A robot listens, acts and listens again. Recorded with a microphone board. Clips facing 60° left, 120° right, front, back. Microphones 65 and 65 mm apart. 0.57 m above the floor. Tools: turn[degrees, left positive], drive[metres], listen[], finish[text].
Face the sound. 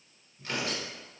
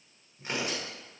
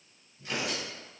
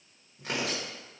Thought: The tearing paper: 170° left.
Action: turn[170]
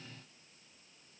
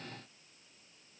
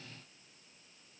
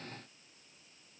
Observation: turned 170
Action: listen[]
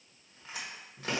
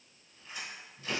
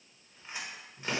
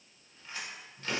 Thought: The tearing paper is now 70° left.
Action: turn[70]
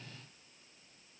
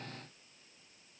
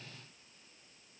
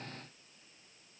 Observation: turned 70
Action: listen[]
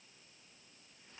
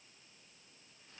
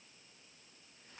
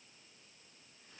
Action: listen[]
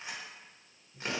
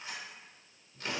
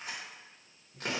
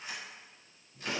Action: finish[Facing the tearing paper.]